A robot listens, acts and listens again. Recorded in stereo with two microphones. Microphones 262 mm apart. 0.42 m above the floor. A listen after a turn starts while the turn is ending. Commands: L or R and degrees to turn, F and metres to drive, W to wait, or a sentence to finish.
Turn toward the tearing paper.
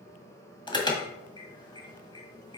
W
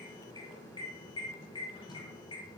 W
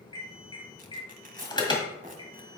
R30
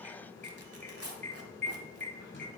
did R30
R115
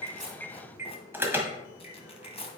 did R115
L25
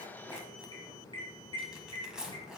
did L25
Facing the tearing paper.